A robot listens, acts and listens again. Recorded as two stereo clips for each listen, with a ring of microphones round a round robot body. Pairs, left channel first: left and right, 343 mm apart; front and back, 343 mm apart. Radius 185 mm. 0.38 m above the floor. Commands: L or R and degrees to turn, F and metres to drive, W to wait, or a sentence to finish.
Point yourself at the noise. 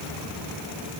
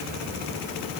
W
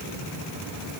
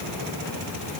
W
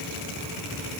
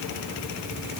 I can't make out anything.